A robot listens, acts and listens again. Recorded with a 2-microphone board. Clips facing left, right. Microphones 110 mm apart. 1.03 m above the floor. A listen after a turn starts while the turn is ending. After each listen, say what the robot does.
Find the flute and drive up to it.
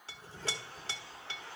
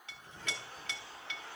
Keep listening.
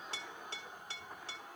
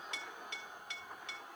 Keep listening.
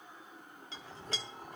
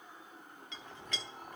I can't make out a flute to turn to.